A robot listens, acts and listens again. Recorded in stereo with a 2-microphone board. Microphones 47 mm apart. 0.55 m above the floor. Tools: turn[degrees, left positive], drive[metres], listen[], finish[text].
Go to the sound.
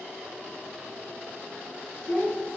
Thought: The child speaking: about 50° left or 130° left.
Action: turn[50]
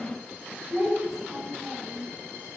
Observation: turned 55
Action: drive[1.0]
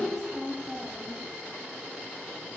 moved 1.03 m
Thought: The child speaking is now 10° right.
Action: turn[-10]
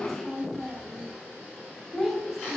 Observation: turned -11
Action: drive[1.0]
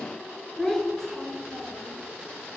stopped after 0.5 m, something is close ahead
Thought: The child speaking is now 10° left.
Action: turn[10]
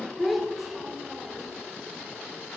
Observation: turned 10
Action: finish[I am next to the child speaking.]